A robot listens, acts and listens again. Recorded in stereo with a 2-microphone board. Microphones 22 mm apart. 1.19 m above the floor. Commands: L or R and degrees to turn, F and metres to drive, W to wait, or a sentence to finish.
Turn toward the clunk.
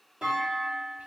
R40
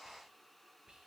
W
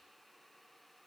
I heard a clunk, but can't make it out now. It was about straight ahead or 100° right.